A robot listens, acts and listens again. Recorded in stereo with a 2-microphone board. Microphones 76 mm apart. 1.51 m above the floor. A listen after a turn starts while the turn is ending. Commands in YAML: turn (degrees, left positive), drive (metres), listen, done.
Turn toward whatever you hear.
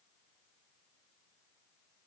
listen: true
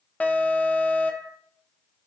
turn: 20
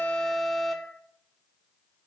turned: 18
done: "Facing the alarm, under 1 m away."